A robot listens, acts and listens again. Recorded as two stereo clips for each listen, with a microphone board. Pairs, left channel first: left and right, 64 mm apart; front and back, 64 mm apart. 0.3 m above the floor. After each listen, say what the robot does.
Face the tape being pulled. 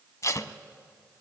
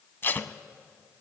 Turn 55° left.
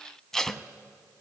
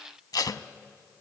Turn 10° left.
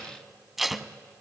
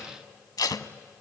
Facing the tape being pulled, under 1 m away.